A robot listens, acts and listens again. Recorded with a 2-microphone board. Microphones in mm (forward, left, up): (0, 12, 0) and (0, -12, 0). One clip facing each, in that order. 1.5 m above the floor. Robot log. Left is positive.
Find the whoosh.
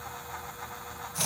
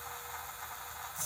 cmd idle
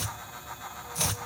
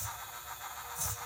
cmd idle
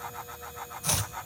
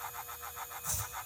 end: I can't make out a whoosh to turn to.